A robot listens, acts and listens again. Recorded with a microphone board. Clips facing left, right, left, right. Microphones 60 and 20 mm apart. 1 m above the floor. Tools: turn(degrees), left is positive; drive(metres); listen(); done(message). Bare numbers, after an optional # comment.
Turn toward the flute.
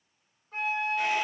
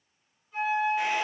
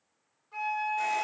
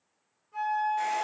# The flute: about 60° left or 120° left.
turn(60)
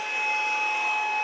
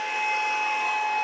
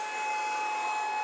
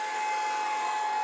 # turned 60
# So it is at 25° left.
turn(25)
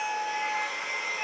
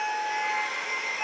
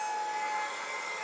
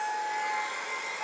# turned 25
# The flute is now 10° right.
turn(-10)
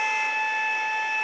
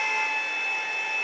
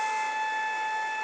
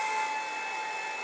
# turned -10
done("Facing the flute, 1 to 2 m away.")